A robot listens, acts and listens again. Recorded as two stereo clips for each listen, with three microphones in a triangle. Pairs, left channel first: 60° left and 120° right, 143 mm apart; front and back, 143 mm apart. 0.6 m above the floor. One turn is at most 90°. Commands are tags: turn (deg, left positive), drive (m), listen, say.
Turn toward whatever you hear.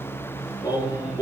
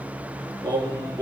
<turn deg="90"/>
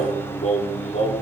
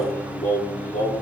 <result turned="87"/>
<turn deg="30"/>
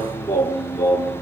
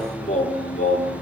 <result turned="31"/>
<say>Facing the singing, over 4 m away.</say>